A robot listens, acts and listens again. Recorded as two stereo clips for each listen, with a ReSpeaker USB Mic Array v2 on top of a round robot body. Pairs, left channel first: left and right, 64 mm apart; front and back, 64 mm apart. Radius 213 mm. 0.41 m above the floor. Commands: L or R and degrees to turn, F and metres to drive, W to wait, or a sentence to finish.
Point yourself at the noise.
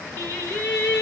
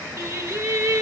L140
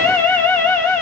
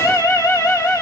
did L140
L25
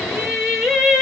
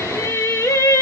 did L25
Found it: singing, straight ahead.